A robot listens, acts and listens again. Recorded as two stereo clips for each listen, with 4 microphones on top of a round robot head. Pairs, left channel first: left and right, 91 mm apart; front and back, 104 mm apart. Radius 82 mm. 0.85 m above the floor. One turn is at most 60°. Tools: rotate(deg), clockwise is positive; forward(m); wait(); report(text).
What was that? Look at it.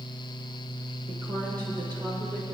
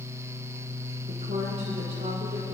rotate(60)
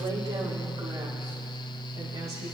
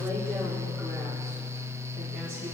rotate(60)
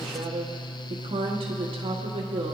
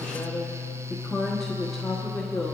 rotate(60)
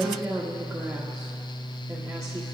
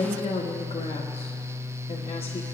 rotate(10)
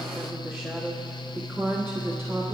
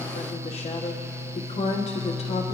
report("Facing the woman speaking.")